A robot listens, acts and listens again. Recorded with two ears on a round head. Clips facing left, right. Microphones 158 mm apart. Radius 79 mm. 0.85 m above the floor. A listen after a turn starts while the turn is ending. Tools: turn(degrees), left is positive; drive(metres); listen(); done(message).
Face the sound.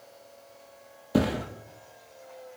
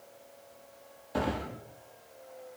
turn(degrees=55)
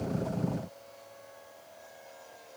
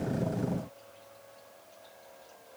listen()
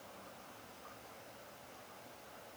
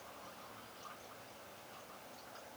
done("I heard a thud, but can't make it out now. It was about straight ahead or 70° left.")